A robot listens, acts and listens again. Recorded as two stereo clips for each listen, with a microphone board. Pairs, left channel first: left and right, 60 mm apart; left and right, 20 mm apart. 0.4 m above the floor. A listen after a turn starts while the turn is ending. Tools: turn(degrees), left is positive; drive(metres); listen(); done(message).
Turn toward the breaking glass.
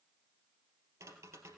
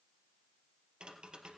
listen()
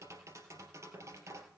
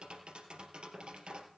listen()
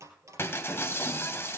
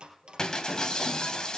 turn(degrees=40)
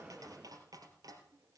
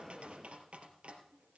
listen()
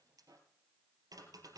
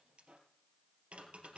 done("I heard breaking glass, but can't make it out now. It was about straight ahead or 100° left.")